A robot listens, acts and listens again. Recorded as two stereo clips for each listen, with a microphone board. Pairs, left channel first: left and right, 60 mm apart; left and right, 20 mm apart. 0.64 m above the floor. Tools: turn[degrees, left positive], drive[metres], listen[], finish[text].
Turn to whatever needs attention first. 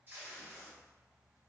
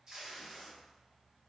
Action: listen[]
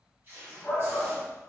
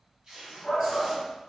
Thought: The shout: about 25° left or 155° left.
Action: turn[25]
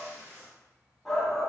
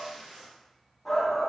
Action: finish[Found it: a shout, straight ahead.]